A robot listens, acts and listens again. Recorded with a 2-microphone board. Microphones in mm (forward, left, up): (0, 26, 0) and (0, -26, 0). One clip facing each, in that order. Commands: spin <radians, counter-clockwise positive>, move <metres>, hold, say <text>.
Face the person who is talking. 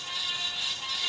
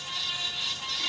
hold
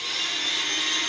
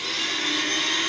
hold
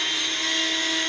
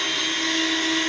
say I can't make out anyone speaking, only a blender.